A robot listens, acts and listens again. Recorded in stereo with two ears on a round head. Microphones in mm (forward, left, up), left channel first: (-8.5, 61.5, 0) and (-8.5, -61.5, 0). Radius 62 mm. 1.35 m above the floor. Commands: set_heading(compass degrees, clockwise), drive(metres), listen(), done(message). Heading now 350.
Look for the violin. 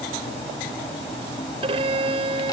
set_heading(30)
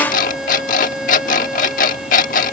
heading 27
done("Facing the violin.")